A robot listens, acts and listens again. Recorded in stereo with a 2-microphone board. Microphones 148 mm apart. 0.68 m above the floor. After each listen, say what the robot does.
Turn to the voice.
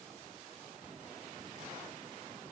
Keep listening.
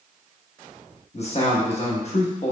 Turn 45° left.
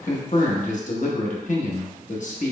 Turn 80° left.
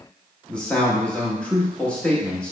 Turn 10° left.
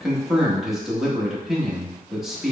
Found it: a man speaking, straight ahead, under 1 m away.